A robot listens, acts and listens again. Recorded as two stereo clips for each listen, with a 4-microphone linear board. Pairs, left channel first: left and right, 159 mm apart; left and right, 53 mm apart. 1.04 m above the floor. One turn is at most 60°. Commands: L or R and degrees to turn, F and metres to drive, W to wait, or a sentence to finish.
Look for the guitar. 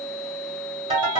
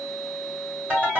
W
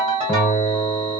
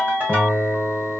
L30
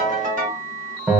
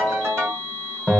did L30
R15
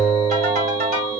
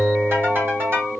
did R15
Facing the guitar.